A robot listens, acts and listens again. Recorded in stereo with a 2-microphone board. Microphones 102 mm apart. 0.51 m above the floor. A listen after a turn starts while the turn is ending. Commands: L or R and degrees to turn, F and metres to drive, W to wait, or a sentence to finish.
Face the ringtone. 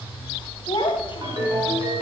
R45
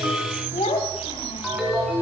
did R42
Found it: a ringtone, straight ahead, 2 to 4 m away.